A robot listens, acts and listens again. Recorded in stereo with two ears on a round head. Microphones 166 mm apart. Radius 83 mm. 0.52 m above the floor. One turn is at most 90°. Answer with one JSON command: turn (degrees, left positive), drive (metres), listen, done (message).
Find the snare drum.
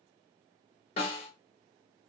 {"turn": 35}
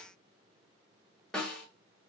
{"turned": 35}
{"done": "Facing the snare drum, under 1 m away."}